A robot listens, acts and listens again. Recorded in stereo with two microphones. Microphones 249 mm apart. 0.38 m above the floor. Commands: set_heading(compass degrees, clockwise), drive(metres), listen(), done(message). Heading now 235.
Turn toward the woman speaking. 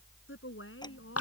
set_heading(175)
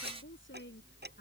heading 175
set_heading(125)
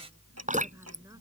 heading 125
listen()
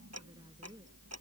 listen()
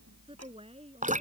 set_heading(150)
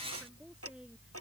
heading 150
done("Facing the woman speaking.")